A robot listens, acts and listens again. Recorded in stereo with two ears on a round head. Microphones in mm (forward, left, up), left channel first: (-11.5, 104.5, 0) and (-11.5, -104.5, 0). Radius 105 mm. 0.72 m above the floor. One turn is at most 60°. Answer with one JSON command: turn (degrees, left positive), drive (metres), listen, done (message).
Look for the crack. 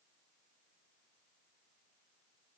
{"listen": true}
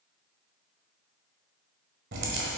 {"turn": -50}
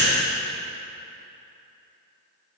{"listen": true}
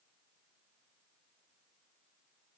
{"done": "I heard a crack, but can't make it out now. It was about straight ahead or 80° right."}